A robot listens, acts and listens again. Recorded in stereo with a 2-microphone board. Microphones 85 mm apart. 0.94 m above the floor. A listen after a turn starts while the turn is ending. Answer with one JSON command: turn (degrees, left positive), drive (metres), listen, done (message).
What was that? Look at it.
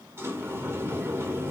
{"turn": -30}
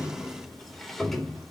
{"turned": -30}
{"done": "Found it: a sliding door, straight ahead, 2 to 4 m away."}